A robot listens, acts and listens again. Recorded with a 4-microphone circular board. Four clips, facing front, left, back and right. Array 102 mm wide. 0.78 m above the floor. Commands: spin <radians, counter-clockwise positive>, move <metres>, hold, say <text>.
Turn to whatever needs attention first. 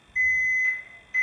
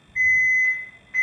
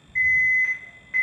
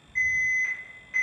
spin -3.05
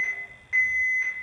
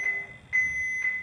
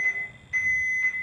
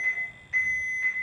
spin 0.44
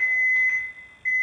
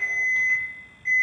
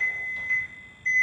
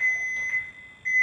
say Facing the alarm.